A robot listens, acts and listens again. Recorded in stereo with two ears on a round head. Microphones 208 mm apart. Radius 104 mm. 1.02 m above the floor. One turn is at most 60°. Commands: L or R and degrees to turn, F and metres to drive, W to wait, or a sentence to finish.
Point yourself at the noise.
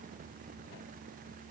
W
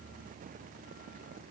W
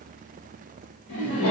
L60
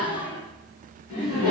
L60
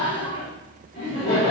L30
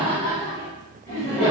Found it: laughter, straight ahead.